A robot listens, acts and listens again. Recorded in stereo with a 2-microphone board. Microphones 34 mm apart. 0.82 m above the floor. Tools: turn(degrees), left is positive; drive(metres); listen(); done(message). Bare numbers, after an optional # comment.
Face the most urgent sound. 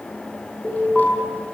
# The alarm: about 20° left or 160° left.
turn(20)
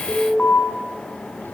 # So it is at 140° left.
turn(140)
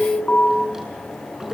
# The alarm is now 30° left.
turn(30)
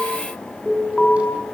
done("Facing the alarm, over 4 m away.")